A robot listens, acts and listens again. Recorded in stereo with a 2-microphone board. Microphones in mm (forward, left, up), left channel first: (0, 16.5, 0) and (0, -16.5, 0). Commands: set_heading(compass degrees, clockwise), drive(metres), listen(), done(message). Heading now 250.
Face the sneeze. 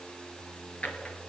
listen()
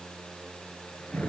listen()
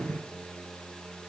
done("I can't make out a sneeze to turn to.")